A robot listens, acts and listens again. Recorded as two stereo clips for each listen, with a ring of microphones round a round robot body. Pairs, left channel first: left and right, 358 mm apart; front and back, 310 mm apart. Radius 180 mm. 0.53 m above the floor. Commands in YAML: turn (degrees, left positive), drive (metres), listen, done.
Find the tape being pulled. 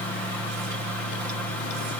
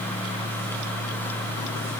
listen: true
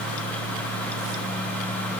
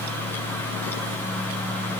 listen: true
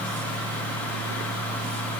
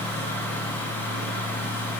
done: "I can't make out tape being pulled."